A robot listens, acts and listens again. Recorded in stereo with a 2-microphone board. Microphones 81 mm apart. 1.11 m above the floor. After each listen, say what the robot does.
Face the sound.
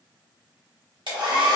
Turn 75° right.
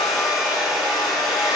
Facing the hair dryer.